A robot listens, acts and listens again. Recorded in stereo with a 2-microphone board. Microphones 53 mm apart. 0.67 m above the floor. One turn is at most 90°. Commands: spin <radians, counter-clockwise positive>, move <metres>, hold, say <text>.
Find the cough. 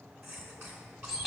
spin -0.79
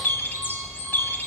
hold
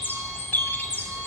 hold
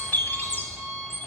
say I heard a cough, but can't make it out now. It was about straight ahead or 90° right.